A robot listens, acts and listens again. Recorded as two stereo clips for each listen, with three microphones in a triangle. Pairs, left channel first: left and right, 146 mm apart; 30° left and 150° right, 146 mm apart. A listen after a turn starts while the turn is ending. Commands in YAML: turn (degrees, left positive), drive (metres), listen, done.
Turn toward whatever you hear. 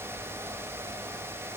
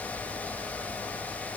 listen: true
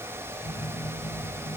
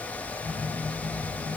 turn: 100
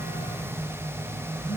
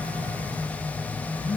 turn: 10
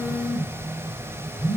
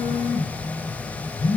done: "Found it: a phone buzzing, straight ahead, 2 to 4 m away."